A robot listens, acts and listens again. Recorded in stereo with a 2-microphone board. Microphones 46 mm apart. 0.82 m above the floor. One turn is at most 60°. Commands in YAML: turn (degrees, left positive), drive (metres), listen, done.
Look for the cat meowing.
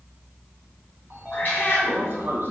turn: 40
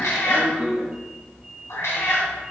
turn: 60
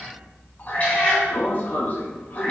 turn: 30
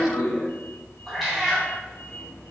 done: "Facing the cat meowing, 2 to 4 m away."